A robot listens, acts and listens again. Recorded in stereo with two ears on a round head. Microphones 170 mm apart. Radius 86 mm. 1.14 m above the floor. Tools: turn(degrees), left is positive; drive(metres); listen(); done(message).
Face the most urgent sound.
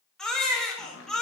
turn(degrees=30)
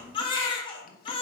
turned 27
turn(degrees=150)
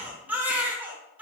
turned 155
turn(degrees=-10)
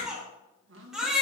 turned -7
done("Found it: a baby crying, straight ahead.")